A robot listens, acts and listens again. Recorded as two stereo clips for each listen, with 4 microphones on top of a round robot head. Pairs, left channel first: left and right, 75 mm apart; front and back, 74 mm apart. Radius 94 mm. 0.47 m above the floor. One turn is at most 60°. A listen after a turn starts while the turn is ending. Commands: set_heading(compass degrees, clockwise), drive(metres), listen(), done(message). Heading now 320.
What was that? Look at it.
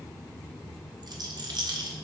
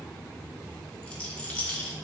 set_heading(20)
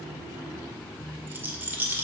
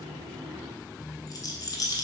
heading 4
set_heading(29)
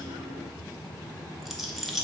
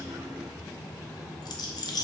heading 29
done("Found it: a rattle, straight ahead, 1 to 2 m away.")